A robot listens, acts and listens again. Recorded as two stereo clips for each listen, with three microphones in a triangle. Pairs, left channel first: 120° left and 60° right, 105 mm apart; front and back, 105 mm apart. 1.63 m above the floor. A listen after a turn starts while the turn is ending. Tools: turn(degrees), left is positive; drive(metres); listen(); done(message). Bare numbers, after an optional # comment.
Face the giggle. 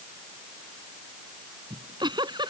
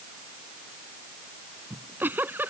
# The giggle: 105° right.
turn(-105)
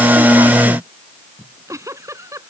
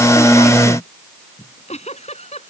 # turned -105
done("Found it: a giggle, straight ahead.")